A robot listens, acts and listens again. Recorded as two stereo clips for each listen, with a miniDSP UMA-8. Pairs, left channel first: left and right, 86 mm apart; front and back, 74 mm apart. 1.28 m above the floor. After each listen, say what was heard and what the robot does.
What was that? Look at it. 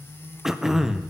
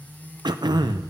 The throat clearing: 175° right. Turn 175° right.
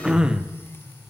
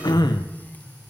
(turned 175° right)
The throat clearing is now 10° right. Turn 10° right.
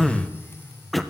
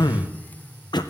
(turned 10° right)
Found it: throat clearing, straight ahead, under 1 m away.